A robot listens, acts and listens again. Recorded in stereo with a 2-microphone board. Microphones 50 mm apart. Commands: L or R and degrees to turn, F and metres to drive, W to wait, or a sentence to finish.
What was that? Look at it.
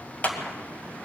L30
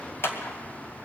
L110
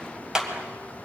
R15
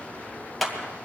Facing the clap.